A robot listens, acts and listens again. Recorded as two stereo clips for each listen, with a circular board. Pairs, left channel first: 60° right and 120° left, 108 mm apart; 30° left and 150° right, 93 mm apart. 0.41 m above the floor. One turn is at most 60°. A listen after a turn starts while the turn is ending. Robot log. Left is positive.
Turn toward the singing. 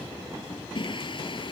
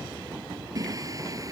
note: The singing: 100° right.
cmd yaw -60
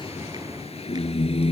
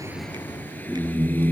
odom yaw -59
note: The singing is now 40° right.
cmd yaw -40
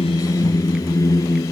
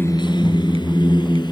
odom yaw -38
end: Found it: singing, straight ahead.